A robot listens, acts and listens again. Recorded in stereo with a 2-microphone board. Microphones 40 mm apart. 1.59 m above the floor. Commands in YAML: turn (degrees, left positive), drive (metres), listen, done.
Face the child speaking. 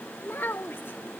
turn: 70
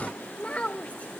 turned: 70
turn: 35
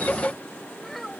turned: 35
done: "Found it: a child speaking, straight ahead."